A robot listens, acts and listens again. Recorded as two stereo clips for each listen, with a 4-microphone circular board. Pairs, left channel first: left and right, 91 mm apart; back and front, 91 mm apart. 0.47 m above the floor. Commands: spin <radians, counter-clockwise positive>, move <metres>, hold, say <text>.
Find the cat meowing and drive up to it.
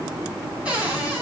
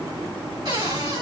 hold
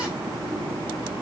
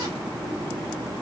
hold
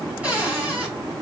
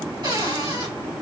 say I can't make out a cat meowing to turn to.